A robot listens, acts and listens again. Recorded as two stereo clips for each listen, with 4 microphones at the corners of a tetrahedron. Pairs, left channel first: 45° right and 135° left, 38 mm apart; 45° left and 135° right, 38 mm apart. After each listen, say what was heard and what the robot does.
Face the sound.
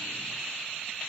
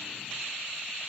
Keep listening.
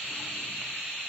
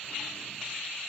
Keep listening.
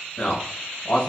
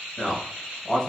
The man speaking: 40° right. Turn 40° right.
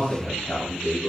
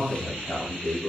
Found it: a man speaking, straight ahead, 1 to 2 m away.